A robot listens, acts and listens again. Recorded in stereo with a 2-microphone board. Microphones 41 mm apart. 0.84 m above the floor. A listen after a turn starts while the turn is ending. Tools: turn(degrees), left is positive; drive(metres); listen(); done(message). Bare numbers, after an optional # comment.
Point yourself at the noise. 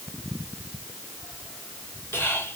# The whispering: about 75° left or 105° left.
turn(75)
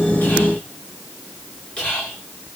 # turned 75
# So it is at 25° left.
turn(25)
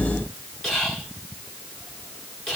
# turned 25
# The whispering is now 15° left.
turn(15)
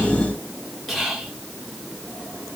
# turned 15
done("Facing the whispering, 2 to 4 m away.")